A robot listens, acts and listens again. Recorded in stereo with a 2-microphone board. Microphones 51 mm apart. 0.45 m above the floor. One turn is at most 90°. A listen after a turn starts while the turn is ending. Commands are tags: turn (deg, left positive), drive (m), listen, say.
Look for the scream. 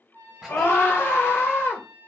<turn deg="60"/>
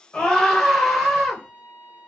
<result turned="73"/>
<say>Found it: a scream, straight ahead.</say>